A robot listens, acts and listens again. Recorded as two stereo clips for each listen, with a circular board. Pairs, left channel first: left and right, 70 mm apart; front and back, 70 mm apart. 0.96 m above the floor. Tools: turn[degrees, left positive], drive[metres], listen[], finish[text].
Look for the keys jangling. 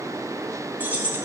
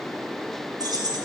Thought: The keys jangling: 155° right.
Action: turn[-155]
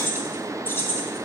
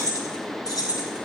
Thought: The keys jangling is now 30° left.
Action: turn[30]
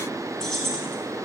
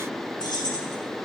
Action: finish[Found it: keys jangling, straight ahead.]